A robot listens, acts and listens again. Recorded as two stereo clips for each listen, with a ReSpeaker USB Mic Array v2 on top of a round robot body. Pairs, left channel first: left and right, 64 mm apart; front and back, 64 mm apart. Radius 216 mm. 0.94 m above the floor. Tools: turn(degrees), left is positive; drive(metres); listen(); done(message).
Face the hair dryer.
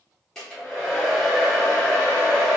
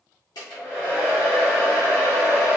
turn(degrees=10)
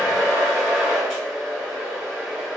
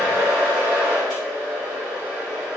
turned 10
done("Facing the hair dryer.")